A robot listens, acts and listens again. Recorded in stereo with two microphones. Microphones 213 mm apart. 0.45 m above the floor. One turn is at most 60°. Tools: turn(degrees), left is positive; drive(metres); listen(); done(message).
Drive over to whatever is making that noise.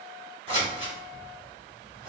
turn(degrees=-25)
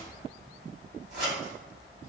turn(degrees=-60)
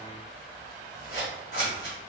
turn(degrees=-60)
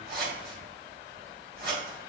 turn(degrees=-55)
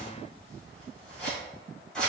drive(metres=1.0)
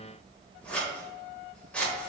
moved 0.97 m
drive(metres=1.0)
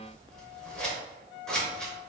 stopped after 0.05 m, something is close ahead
done("Arrived at the scissors, straight ahead.")